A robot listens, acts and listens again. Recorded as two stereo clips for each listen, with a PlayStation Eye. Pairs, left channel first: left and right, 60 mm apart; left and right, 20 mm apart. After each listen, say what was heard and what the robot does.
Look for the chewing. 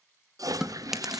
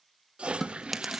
Turn 30° right.
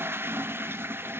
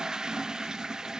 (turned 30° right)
Keep listening.
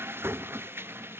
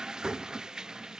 Keep listening.
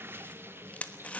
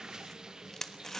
So it is at 25° left. Turn 25° left.
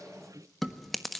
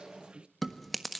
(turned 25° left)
Facing the chewing, 1 to 2 m away.